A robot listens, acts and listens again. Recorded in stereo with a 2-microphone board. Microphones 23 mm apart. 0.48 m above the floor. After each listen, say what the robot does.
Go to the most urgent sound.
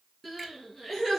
Turn 30° right.
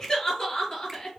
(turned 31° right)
Turn 25° left.
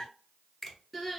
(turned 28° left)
Drive 1.0 m forward.
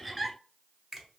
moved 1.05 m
Drive 1.0 m forward.
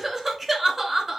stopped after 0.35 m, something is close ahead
Turn 10° right.
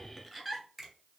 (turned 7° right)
I am next to the crying.